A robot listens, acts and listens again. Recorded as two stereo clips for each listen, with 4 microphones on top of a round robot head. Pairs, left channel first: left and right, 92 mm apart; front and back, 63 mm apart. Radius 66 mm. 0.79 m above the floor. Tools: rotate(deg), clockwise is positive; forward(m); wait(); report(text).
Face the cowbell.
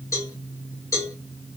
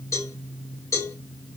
rotate(-35)
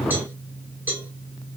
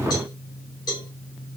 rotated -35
rotate(20)
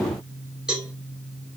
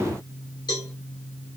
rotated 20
rotate(10)
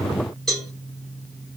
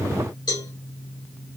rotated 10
report("Facing the cowbell, 2 to 4 m away.")